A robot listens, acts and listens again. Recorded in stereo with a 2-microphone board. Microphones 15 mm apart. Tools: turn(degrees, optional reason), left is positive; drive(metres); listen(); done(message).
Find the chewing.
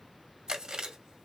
turn(degrees=-60, reason="The chewing: about 60° right or 120° right.")
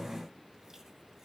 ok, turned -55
listen()
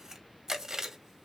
turn(degrees=-35, reason="So it is at 35° right.")
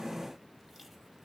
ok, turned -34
listen()
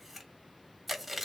done("Facing the chewing, 1 to 2 m away.")